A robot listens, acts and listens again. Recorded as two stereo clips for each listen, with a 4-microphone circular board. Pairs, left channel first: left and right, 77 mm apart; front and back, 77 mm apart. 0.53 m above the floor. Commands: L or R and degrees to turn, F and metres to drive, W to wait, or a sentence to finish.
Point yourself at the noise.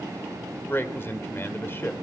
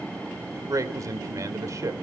L145
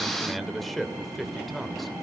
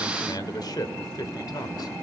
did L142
Facing the man speaking, 2 to 4 m away.